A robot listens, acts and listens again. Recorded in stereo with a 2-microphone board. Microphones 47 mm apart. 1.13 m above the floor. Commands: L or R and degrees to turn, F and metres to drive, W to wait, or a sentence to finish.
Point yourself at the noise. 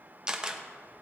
R15
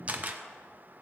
R145
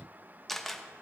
Facing the camera shutter.